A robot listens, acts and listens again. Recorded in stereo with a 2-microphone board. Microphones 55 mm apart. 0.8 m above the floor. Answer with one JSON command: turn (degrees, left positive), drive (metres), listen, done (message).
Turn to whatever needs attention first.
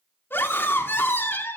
{"turn": 40}
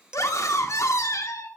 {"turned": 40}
{"turn": 95}
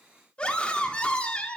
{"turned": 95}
{"turn": 20}
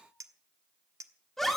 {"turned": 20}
{"done": "Facing the scream."}